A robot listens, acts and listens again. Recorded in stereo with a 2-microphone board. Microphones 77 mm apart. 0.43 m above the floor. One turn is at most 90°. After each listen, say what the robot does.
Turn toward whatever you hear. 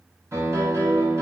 Turn 40° right.
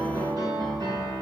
Turn 90° right.
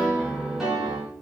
Facing the piano.